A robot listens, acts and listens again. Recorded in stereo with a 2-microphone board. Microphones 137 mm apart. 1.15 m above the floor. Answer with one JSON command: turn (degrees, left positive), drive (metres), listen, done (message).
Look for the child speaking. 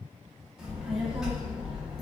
{"turn": -30}
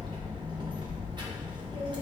{"turn": -145}
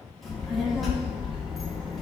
{"done": "Found it: a child speaking, straight ahead."}